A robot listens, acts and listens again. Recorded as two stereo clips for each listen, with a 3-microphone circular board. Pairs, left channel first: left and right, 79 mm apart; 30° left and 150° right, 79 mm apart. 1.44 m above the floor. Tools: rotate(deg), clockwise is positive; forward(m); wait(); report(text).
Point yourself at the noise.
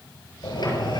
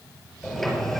rotate(-115)
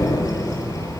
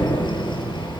rotate(-40)
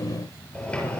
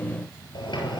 rotate(-15)
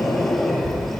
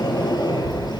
report("Facing the sliding door, over 4 m away.")